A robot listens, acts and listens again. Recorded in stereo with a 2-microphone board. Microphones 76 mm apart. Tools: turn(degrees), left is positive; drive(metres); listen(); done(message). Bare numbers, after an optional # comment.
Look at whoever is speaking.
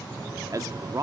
# The man speaking: about 45° right or 135° right.
turn(-45)
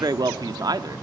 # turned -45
# So it is at 80° right.
turn(-80)
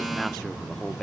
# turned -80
done("Facing the man speaking, 1 to 2 m away.")